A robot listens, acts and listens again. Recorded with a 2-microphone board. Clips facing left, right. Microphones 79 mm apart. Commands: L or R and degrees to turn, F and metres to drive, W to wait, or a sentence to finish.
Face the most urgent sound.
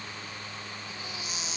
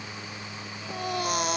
R60
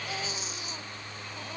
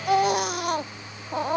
R65
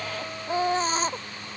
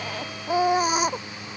R10
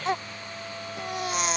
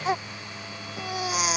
Facing the baby crying.